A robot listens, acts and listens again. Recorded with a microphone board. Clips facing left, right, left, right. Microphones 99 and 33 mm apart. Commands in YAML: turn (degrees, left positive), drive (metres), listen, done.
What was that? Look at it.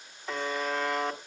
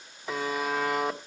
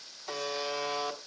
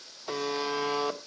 turn: -30
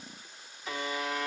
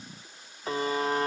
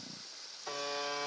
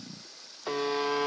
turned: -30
turn: -145
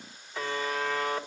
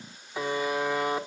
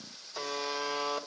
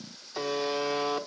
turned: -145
turn: -15
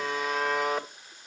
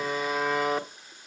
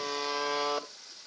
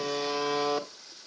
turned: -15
done: "Found it: a buzzer, straight ahead."